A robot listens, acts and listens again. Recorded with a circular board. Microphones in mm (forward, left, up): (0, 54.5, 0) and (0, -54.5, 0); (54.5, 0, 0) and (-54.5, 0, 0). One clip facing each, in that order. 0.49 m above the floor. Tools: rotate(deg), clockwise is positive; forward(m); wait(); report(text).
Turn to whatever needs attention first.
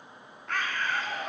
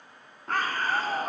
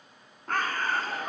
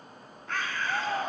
rotate(135)
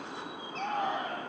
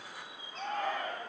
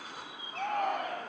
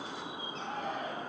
rotate(-20)
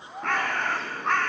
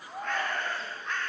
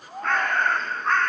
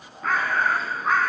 report("Facing the shout, over 4 m away.")